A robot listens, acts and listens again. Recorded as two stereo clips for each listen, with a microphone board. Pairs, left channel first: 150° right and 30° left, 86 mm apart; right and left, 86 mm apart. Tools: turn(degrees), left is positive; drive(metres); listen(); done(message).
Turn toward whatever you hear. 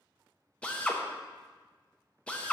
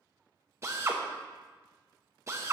turn(degrees=135)
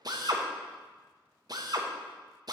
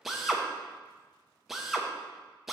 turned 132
done("Found it: a drill, straight ahead.")